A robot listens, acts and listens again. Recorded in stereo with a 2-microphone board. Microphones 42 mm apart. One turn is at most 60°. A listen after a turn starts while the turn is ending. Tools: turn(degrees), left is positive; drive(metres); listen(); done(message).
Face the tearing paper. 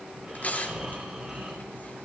turn(degrees=40)
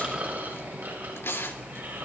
turn(degrees=60)
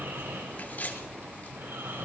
turn(degrees=50)
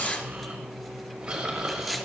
listen()
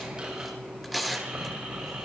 done("Found it: tearing paper, straight ahead.")